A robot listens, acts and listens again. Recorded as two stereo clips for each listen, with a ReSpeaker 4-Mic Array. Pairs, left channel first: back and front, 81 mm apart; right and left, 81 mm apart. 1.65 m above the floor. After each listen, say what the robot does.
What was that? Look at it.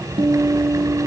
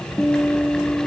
Found it: a guitar, straight ahead.